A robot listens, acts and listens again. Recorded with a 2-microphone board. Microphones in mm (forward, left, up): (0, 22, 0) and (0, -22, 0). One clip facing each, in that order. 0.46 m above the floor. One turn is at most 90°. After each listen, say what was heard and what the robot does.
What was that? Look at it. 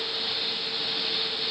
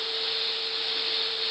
Keep listening.
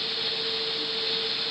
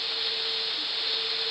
Keep listening.
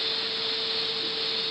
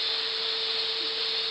I can't make out anything.